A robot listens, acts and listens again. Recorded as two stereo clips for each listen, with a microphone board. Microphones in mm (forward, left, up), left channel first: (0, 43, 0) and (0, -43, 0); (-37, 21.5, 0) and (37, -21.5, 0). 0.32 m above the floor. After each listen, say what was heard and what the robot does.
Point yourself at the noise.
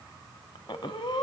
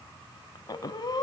The breathing: 110° left. Turn 110° left.
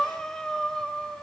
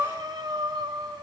Facing the breathing, 1 to 2 m away.